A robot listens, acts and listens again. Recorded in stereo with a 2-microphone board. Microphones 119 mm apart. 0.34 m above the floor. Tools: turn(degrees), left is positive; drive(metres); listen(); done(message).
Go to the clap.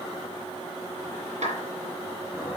turn(degrees=-90)
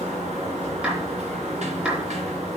turn(degrees=-10)
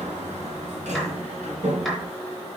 listen()
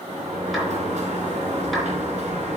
listen()
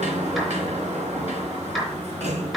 drive(metres=1.0)
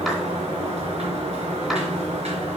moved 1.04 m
listen()
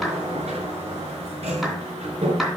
drive(metres=1.0)
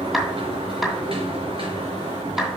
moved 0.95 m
drive(metres=1.0)
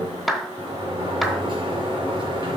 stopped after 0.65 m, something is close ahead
done("I am next to the clap.")